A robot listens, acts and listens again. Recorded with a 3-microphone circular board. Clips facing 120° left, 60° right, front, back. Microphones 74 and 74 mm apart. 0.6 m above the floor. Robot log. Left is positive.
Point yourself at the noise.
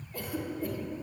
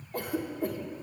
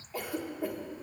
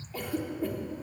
note: The cough: 80° right.
cmd yaw -80
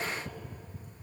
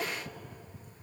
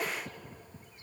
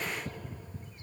cmd idle
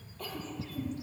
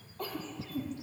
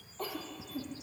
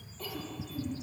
note: The cough is now 20° right.
cmd yaw -20
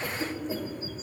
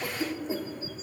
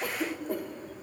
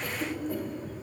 end: Found it: a cough, straight ahead.